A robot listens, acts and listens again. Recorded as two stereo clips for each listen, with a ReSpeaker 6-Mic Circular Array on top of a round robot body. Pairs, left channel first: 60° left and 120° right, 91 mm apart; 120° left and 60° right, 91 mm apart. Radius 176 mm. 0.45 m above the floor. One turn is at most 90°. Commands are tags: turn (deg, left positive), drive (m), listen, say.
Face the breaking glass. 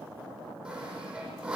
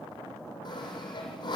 <listen/>
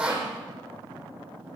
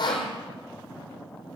<listen/>
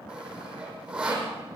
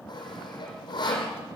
<say>I can't make out breaking glass, only sawing.</say>